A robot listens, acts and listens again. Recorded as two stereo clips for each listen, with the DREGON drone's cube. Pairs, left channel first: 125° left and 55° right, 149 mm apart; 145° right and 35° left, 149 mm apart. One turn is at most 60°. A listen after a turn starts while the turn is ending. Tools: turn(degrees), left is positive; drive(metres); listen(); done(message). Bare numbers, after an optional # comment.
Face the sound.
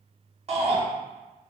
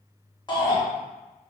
# The shout: 90° right.
turn(-60)
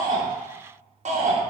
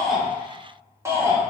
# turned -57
# The shout is now 35° right.
turn(-35)
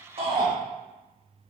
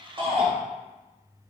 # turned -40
listen()
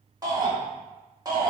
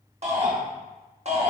done("Facing the shout.")